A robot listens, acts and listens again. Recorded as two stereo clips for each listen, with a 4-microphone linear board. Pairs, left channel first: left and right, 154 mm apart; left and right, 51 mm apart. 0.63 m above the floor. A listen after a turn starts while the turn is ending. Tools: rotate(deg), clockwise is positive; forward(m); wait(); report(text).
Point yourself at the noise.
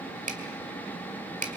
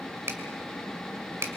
rotate(55)
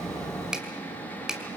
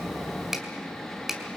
report("Facing the finger snap.")